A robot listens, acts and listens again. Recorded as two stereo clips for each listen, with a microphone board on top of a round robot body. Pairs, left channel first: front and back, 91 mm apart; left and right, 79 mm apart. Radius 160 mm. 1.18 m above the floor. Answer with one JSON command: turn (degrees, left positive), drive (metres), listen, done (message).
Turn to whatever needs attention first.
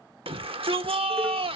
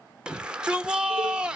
{"turn": -170}
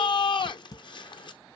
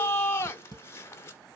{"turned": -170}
{"turn": 30}
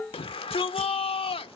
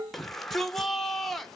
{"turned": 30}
{"done": "Found it: a shout, straight ahead, 1 to 2 m away."}